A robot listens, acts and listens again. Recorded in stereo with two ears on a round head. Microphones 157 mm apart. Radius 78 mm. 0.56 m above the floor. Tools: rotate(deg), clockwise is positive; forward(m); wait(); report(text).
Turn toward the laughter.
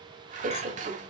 rotate(45)
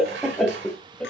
report("Found it: laughter, straight ahead, 2 to 4 m away.")